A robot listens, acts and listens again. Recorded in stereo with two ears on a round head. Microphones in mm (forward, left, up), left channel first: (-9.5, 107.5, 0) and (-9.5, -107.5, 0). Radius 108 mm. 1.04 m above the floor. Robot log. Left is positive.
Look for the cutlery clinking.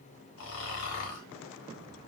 cmd idle
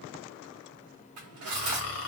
note: The cutlery clinking: about 60° right or 120° right.
cmd yaw -60
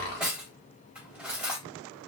end: Found it: cutlery clinking, straight ahead, 1 to 2 m away.